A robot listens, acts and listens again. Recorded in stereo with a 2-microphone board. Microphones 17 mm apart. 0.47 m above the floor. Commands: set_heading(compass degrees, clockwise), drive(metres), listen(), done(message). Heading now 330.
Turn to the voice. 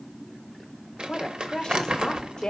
set_heading(280)
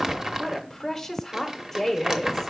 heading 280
set_heading(260)
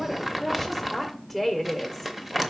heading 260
done("Found it: a woman speaking, straight ahead, 1 to 2 m away.")